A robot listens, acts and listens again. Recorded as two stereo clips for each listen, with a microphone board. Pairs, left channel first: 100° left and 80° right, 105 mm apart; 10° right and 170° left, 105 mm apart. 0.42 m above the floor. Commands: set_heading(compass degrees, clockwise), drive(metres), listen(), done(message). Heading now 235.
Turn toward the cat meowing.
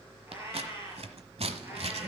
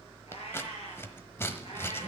set_heading(245)
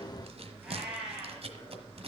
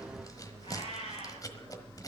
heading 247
done("Found it: a cat meowing, straight ahead.")